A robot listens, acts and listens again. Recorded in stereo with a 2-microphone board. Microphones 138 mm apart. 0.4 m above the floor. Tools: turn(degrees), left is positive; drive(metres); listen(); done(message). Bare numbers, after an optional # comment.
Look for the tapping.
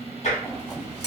# The tapping: about 65° left or 115° left.
turn(65)
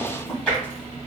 done("Facing the tapping.")